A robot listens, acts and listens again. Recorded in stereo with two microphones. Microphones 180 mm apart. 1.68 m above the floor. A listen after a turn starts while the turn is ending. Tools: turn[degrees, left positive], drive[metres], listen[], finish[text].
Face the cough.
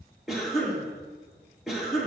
Action: turn[30]
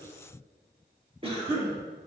Thought: So it is at 30° right.
Action: turn[-30]
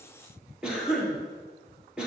Action: finish[Found it: a cough, straight ahead.]